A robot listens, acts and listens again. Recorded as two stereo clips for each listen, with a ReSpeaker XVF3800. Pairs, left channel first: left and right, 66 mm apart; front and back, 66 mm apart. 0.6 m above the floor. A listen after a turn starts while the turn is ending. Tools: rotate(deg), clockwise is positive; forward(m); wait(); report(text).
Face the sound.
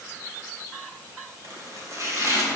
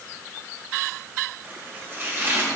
rotate(125)
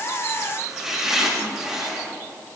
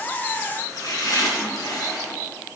report("Facing the chopping, 2 to 4 m away.")